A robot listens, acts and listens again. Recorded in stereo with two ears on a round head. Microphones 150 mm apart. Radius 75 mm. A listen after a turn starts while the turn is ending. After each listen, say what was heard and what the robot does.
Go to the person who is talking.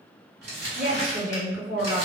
The woman speaking: about 20° right or 160° right. Turn 20° right.
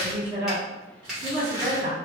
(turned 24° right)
So it is at 135° right. Turn 135° right.
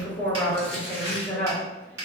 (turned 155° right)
The woman speaking is now 20° left. Turn 20° left.
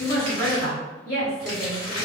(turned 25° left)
Drive 1.0 m forward.
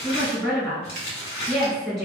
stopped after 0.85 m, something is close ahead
Arrived at the woman speaking, straight ahead.